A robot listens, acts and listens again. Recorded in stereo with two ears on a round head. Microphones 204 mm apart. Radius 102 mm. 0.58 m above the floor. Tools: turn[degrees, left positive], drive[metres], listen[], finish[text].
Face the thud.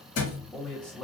Thought: The thud: about 65° left or 115° left.
Action: turn[65]
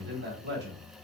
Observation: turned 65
Action: listen[]
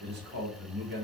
Action: finish[I heard a thud, but can't make it out now. It was about straight ahead or 50° left.]